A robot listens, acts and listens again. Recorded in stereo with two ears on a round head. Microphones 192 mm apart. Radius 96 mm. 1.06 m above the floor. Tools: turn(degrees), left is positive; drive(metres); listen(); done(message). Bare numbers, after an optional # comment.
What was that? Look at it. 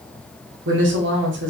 # The woman speaking: about 55° right or 125° right.
turn(-55)
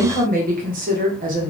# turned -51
# So it is at 50° right.
turn(-50)
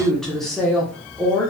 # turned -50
done("Found it: a woman speaking, straight ahead.")